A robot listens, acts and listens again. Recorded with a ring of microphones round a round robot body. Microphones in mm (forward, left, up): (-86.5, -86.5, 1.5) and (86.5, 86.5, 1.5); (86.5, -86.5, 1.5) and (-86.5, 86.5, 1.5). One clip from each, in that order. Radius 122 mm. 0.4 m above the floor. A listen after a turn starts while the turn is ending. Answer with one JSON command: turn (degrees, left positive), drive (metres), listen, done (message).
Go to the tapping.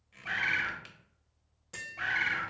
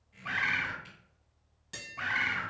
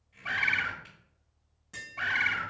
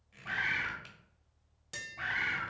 {"turn": 105}
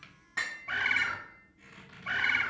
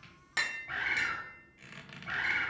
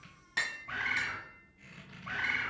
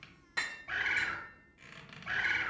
{"drive": 1.0}
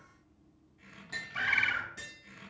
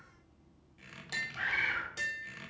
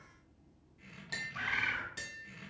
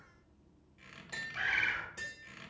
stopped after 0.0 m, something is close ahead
{"done": "Blocked. The tapping is further on, straight ahead."}